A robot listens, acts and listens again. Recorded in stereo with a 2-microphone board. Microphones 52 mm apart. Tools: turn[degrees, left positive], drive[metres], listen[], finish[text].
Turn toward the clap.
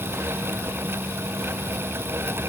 Action: listen[]
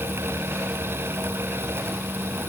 Action: listen[]
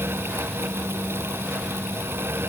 Action: finish[I can't make out a clap to turn to.]